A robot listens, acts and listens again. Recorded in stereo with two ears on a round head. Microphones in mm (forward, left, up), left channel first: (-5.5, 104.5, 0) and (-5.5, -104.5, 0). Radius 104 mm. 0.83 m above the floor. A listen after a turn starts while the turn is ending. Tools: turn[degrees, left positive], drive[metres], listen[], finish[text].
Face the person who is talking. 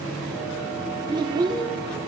Thought: The child speaking: about 20° right or 160° right.
Action: turn[-20]
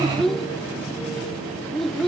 Action: finish[Facing the child speaking.]